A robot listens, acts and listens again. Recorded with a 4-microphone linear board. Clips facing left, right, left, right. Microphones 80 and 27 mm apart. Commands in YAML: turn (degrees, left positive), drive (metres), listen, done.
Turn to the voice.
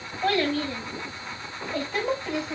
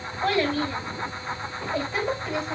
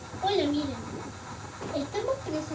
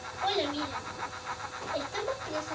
turn: 30
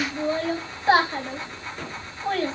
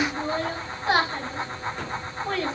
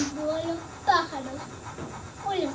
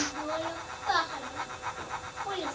turn: 145
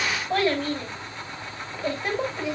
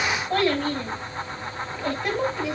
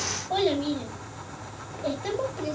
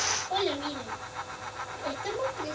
done: "Facing the child speaking, 2 to 4 m away."